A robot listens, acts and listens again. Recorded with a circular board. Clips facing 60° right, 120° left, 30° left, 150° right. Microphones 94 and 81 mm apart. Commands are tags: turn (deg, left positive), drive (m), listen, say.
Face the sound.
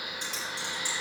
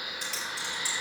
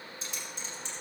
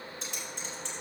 <listen/>
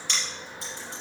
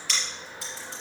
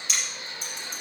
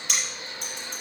<turn deg="-120"/>
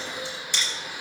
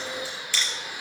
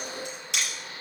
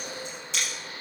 <turn deg="10"/>
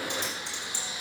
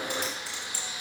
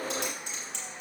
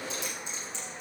<say>Found it: typing on a keyboard, straight ahead.</say>